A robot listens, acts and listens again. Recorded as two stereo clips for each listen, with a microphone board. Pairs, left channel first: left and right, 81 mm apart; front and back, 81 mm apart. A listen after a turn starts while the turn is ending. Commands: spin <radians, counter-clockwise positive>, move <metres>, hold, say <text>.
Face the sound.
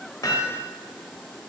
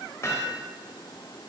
spin 0.96
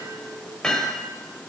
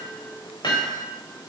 spin 0.17
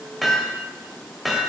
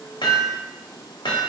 say Found it: hammering, straight ahead, 1 to 2 m away.